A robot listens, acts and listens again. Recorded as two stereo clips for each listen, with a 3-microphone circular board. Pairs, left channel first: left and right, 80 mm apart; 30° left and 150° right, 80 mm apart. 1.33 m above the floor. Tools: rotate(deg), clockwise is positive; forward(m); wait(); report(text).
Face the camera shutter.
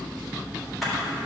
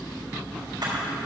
rotate(-180)
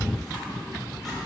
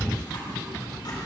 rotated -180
wait()
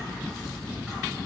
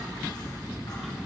wait()
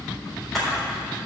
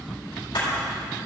report("Found it: a camera shutter, straight ahead, 2 to 4 m away.")